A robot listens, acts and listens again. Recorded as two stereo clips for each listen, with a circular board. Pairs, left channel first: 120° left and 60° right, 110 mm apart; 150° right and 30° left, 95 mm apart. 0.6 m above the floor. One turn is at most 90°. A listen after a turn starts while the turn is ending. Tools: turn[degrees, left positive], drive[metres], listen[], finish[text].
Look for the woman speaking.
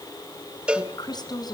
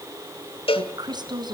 Thought: The woman speaking: 70° left.
Action: turn[70]
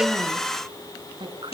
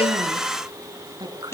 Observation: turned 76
Thought: The woman speaking is now 15° right.
Action: turn[-15]
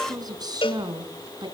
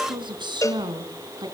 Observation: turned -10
Thought: The woman speaking is now 15° right.
Action: turn[-15]
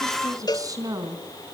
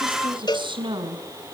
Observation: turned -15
Action: finish[Facing the woman speaking.]